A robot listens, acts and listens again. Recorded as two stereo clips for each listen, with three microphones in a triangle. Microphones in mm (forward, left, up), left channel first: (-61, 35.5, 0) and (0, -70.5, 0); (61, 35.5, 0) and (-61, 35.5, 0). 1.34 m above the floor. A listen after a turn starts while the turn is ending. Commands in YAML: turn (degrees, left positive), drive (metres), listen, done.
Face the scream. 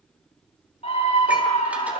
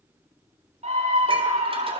turn: 155
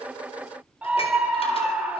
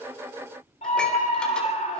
turn: 15
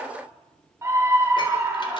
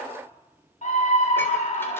done: "Found it: a scream, straight ahead."